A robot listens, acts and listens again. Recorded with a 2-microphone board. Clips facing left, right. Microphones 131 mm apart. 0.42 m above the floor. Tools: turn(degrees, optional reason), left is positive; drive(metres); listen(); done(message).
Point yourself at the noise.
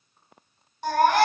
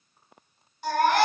turn(degrees=45, reason="The baby crying: about 45° left or 135° left.")
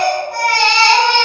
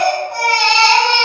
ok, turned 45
done("Found it: a baby crying, straight ahead.")